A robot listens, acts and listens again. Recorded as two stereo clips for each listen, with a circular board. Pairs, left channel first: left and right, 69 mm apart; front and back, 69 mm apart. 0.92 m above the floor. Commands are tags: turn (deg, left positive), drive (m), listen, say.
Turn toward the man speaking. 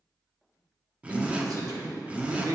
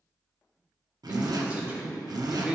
<turn deg="-110"/>
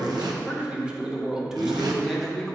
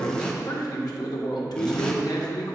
<say>Facing the man speaking, 1 to 2 m away.</say>